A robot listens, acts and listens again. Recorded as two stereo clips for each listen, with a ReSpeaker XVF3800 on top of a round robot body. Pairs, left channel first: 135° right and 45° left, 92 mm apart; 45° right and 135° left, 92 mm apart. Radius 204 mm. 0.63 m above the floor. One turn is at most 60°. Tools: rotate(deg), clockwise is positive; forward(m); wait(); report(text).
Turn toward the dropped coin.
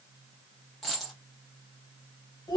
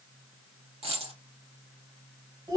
rotate(-60)
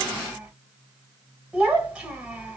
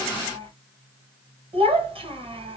rotate(-60)
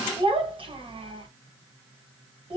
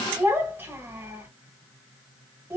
rotate(-15)
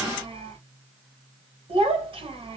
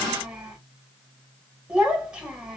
report("Facing where the dropped coin came from. I can't hear it now.")